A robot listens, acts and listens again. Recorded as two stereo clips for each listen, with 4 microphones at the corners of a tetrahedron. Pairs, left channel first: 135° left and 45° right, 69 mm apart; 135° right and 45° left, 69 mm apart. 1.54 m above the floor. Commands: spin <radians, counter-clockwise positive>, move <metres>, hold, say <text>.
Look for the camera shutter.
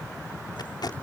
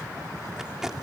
hold
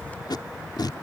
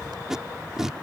hold
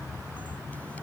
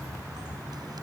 say I can't make out a camera shutter, only tape being pulled.